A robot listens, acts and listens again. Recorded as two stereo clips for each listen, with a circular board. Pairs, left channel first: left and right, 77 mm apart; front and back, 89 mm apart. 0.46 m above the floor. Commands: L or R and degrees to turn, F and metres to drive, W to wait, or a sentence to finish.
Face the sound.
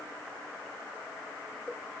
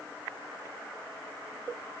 W
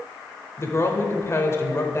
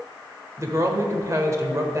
L135
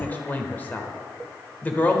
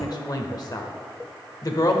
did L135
L30
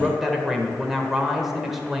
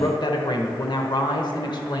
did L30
Facing the woman speaking, 1 to 2 m away.